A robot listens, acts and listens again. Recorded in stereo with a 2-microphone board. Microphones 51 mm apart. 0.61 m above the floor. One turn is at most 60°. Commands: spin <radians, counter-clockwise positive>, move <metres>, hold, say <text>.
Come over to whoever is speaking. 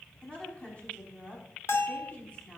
spin 0.35
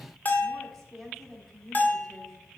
move 1.0
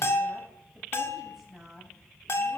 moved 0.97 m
move 1.0
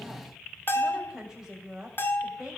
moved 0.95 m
spin -0.26
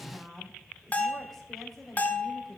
move 1.0
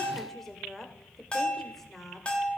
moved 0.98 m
move 1.0
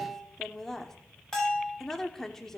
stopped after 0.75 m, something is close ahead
spin 0.17
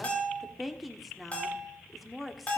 say Arrived at the woman speaking, straight ahead.